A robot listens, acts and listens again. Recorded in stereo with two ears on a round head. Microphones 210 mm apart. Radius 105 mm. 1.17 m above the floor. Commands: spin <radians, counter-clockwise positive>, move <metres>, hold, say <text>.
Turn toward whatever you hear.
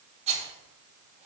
spin -0.52
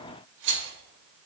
spin -2.09
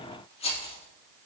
spin 0.44
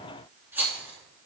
spin -0.17
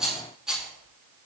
say Facing the rattle, 2 to 4 m away.